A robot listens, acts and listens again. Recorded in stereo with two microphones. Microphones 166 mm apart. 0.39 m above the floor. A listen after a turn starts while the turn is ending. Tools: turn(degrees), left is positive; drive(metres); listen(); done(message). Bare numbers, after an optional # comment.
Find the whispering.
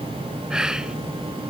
turn(-30)
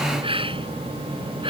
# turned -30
# So it is at 145° right.
turn(-145)
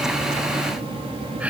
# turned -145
# The whispering is now 10° right.
turn(-10)
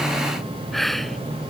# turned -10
done("Facing the whispering.")